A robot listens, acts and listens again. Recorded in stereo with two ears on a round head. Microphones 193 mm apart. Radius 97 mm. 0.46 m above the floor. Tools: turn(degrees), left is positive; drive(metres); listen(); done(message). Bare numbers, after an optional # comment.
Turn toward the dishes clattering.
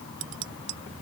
# The dishes clattering: about 65° right or 115° right.
turn(-65)
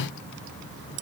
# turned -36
# So it is at 80° right.
turn(-80)
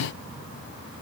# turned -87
listen()
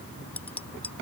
# The dishes clattering is now 10° left.
turn(10)
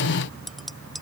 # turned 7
done("Facing the dishes clattering.")